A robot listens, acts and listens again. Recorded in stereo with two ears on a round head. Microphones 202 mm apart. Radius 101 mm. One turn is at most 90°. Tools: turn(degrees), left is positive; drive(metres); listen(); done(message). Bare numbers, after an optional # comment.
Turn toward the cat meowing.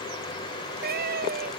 # The cat meowing: about 50° right or 130° right.
turn(-50)
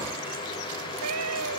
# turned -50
# So it is at 85° right.
turn(-85)
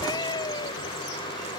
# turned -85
# The cat meowing is now 20° left.
turn(20)
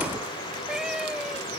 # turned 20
done("Found it: a cat meowing, straight ahead.")